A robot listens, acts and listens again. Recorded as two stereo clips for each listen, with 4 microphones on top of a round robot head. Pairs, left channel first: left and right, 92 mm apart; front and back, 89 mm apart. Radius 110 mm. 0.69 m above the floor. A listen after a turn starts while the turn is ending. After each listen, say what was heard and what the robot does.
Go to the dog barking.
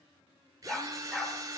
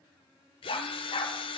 Drive 1.0 m forward.
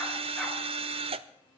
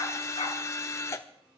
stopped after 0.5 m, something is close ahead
Keep listening.
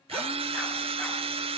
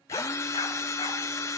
Keep listening.
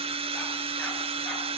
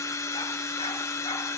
I heard a dog barking from this way, but can't make it out now. I did not reach it.